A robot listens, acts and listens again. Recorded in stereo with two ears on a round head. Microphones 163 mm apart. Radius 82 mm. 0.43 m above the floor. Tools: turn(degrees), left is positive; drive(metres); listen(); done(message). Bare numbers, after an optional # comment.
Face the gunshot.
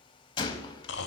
# The gunshot: about 25° left or 155° left.
turn(25)
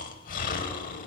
listen()
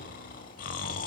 done("I heard a gunshot, but can't make it out now. It was about straight ahead or 130° left.")